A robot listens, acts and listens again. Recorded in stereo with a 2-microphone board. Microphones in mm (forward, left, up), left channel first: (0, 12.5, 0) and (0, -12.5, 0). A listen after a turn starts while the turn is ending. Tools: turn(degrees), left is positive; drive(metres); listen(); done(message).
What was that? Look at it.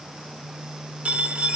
turn(degrees=-90)
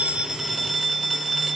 done("Facing the phone ringing.")